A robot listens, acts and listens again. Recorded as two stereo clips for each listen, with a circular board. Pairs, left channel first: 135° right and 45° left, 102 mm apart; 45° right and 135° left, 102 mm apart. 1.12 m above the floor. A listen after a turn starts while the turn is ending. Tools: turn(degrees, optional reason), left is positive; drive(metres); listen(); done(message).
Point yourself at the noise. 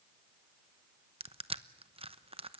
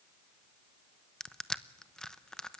turn(degrees=35, reason="The crushing: 35° left.")
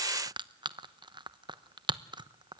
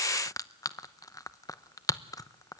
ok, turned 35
done("Facing the crushing.")